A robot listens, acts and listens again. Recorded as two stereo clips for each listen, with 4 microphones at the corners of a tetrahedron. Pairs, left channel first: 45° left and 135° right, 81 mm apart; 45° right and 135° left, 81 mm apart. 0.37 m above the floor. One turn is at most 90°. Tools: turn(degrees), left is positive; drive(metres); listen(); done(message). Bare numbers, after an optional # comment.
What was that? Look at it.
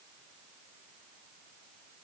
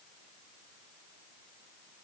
listen()
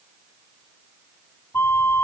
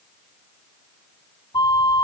# The flute: 15° right.
turn(-15)
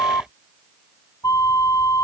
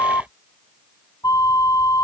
done("Found it: a flute, straight ahead.")